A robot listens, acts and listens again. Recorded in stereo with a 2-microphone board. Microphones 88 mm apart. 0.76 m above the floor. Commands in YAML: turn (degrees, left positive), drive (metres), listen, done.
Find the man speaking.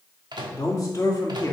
turn: 35
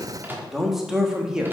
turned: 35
turn: -10
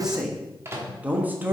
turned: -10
turn: -25
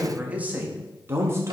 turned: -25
turn: -35
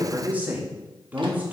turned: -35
turn: -20
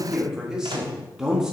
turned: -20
done: "Facing the man speaking."